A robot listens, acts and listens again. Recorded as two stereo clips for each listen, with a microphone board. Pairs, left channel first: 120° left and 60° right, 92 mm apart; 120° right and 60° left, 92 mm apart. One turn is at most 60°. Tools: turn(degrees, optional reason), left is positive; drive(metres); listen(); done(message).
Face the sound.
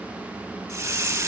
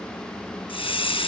turn(degrees=-60, reason="The hiss: 120° right.")
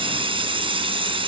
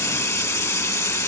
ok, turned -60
turn(degrees=-60, reason="The hiss is now 65° right.")
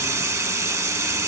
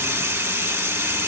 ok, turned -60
done("Found it: a hiss, straight ahead, 1 to 2 m away.")